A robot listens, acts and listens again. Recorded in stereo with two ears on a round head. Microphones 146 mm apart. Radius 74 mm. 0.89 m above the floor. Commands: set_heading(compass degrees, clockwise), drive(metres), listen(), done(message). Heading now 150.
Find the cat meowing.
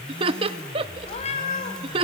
set_heading(105)
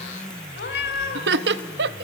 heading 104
set_heading(44)
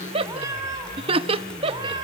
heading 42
set_heading(72)
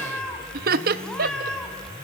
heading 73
done("Facing the cat meowing, 2 to 4 m away.")